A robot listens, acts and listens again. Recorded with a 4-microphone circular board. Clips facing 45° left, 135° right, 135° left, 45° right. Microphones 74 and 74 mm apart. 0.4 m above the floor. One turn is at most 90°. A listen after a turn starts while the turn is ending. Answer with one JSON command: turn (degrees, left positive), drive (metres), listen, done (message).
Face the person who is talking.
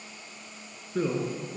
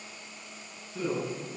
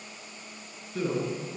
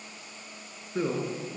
{"turn": 15}
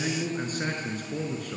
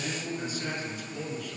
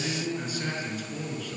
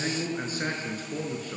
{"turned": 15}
{"turn": 10}
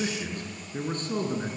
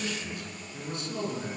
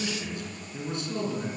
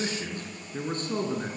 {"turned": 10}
{"done": "Found it: a man speaking, straight ahead."}